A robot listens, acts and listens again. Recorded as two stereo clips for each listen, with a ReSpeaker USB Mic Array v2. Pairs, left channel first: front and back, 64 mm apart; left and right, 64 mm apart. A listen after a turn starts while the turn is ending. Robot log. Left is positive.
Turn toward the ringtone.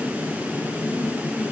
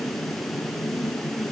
cmd idle
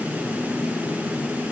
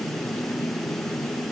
cmd idle
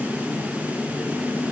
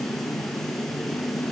end: I can't make out a ringtone to turn to.